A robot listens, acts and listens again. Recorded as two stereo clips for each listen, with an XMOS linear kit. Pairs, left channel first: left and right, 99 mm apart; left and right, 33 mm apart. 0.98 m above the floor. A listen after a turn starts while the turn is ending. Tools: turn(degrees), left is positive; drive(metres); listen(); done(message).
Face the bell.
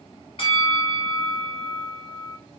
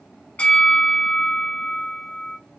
turn(degrees=55)
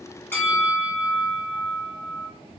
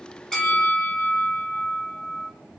done("Found it: a bell, straight ahead.")